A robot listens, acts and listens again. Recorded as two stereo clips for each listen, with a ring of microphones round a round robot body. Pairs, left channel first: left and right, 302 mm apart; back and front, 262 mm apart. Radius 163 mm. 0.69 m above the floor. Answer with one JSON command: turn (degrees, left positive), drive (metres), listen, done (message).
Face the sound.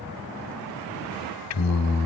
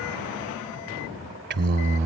{"turn": 55}
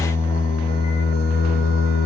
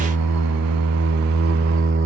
{"turn": 45}
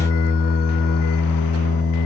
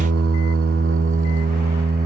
{"turn": 55}
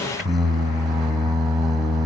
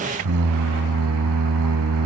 {"done": "Found it: singing, straight ahead."}